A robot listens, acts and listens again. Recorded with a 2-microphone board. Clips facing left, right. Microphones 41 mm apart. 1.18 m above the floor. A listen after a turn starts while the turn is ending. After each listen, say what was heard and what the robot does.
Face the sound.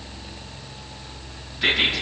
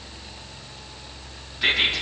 Turn 30° left.
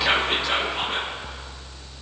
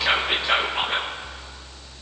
So it is at 30° right. Turn 30° right.
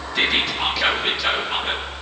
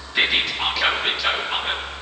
Facing the whispering, under 1 m away.